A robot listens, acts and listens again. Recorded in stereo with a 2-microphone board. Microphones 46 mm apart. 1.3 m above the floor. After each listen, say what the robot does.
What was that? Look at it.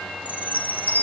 Turn 40° left.
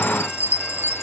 Turn 95° left.
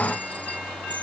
Keep listening.
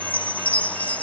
Turn 35° left.
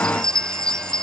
Turn 15° left.
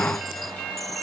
Keep listening.
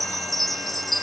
Found it: a chime, straight ahead.